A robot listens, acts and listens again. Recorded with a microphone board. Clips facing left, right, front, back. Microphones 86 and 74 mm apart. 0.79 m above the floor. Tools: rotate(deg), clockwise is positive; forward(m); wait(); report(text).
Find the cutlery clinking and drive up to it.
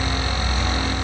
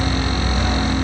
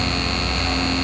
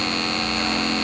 wait()
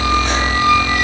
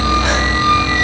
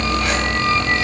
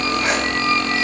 wait()
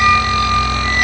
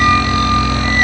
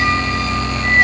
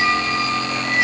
report("I can't make out cutlery clinking to turn to.")